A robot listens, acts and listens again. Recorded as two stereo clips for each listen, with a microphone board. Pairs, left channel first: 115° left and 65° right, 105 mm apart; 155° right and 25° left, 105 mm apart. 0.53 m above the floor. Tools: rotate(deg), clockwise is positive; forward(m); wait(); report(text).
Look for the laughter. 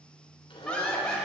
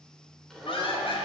rotate(165)
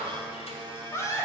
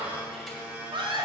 rotate(-55)
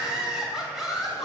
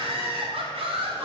rotate(-20)
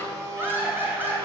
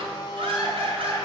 report("Found it: laughter, straight ahead.")